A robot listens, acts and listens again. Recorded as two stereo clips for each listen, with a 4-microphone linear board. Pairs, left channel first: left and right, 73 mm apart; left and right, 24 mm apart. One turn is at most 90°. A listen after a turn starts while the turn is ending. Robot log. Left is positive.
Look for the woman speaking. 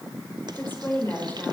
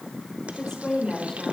note: The woman speaking: about 25° left or 155° left.
cmd yaw +25
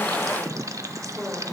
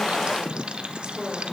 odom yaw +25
note: So it is at 10° right.
cmd yaw -10
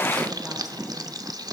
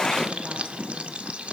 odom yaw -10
cmd idle
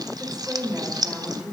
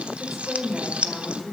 note: The woman speaking is now 15° right.
cmd yaw -15
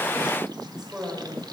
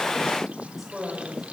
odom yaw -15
note: The woman speaking is now 10° right.
cmd yaw -10
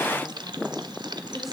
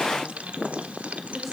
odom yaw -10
end: Facing the woman speaking.